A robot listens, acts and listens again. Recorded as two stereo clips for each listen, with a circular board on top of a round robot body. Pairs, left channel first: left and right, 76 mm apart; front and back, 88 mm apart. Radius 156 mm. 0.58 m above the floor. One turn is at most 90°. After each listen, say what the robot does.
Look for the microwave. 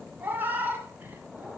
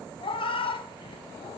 Keep listening.
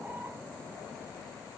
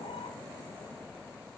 Keep listening.
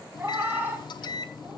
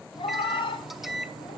Turn 90° left.
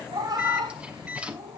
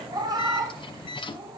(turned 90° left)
Turn 15° right.
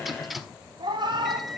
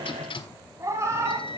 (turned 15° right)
Found it: a microwave, straight ahead.